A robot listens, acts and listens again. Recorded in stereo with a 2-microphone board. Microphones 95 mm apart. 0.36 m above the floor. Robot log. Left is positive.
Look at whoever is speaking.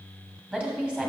cmd yaw -30
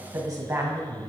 note: So it is at 135° right.
cmd yaw -135
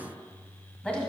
note: The woman speaking is now 15° left.
cmd yaw +15
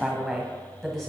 end: Facing the woman speaking.